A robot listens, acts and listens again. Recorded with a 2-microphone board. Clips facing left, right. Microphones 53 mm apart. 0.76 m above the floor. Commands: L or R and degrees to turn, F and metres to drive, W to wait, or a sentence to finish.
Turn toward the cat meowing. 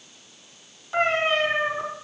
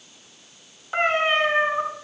R30
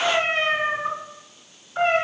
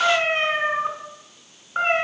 R145
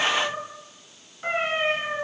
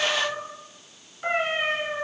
R10
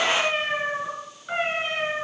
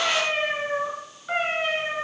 Found it: a cat meowing, straight ahead.